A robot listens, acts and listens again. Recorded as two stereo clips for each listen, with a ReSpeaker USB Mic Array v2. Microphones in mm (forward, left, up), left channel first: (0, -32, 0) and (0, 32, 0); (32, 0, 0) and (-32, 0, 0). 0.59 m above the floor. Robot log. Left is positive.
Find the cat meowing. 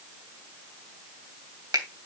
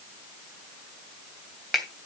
cmd idle
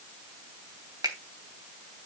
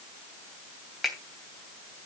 cmd idle
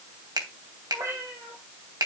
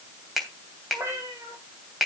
note: The cat meowing: 130° left.
cmd yaw +130
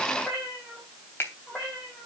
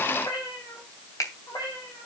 end: Found it: a cat meowing, straight ahead.